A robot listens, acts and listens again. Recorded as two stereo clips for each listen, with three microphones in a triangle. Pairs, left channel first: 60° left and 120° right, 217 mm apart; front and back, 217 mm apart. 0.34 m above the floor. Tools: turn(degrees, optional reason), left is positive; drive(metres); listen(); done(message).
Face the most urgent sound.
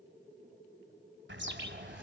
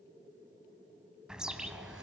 listen()
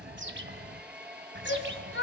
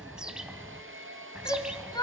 turn(degrees=70, reason="The shout: 70° left.")
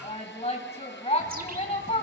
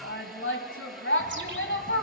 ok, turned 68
done("Facing the shout, 1 to 2 m away.")